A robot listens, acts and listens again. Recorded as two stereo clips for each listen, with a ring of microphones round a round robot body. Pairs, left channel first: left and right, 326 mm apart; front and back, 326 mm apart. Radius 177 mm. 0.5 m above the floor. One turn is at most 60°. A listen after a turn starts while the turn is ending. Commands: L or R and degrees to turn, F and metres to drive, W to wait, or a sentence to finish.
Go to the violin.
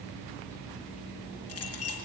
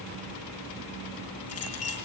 W
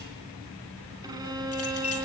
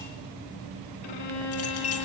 R10
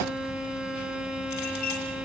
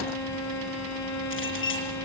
F1.0
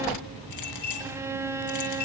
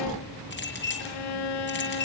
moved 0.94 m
R10
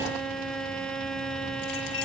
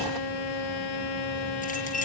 F1.0
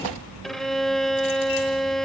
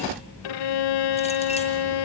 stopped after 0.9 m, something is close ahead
I am next to the violin.